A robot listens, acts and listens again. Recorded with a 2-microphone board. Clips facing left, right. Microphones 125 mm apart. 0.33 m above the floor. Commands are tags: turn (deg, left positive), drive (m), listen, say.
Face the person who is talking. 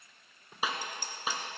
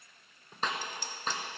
<listen/>
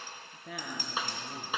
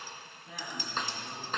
<turn deg="90"/>
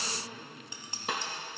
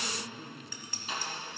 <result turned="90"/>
<turn deg="-10"/>
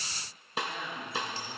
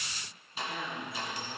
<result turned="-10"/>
<say>Found it: a woman speaking, straight ahead.</say>